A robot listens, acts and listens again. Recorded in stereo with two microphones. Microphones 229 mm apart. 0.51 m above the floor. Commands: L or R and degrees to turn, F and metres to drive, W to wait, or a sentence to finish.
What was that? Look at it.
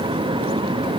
W
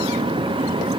W
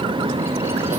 I can't make out anything to turn to.